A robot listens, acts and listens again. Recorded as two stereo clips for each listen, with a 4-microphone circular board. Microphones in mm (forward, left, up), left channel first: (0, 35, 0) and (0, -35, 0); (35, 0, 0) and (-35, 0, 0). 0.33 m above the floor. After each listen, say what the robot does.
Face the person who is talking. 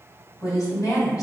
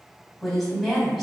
Turn 90° left.
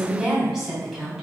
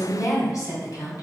Found it: a woman speaking, straight ahead.